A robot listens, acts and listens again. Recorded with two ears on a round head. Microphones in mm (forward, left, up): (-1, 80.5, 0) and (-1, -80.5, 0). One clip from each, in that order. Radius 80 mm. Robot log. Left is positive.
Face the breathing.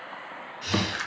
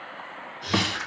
note: The breathing: about 30° left or 150° left.
cmd yaw +30
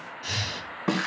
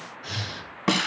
note: So it is at 120° left.
cmd yaw +120
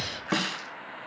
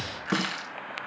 note: The breathing is now 45° left.
cmd yaw +45
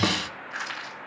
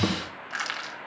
cmd idle
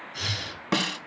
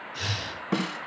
end: Facing the breathing, 2 to 4 m away.